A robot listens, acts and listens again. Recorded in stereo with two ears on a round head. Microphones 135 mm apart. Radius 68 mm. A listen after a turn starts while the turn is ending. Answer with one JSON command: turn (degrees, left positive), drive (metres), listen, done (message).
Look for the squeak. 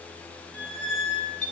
{"turn": 30}
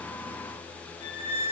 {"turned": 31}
{"turn": 140}
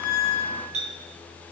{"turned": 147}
{"turn": -10}
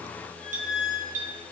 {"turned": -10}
{"done": "Found it: a squeak, straight ahead, 2 to 4 m away."}